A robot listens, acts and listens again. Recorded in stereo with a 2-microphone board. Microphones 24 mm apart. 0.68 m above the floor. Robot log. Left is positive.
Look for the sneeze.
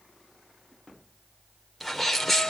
cmd yaw +30
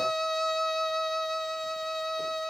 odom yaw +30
cmd idle
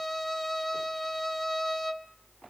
end: I heard a sneeze, but can't make it out now. It was about 25° right or 145° left.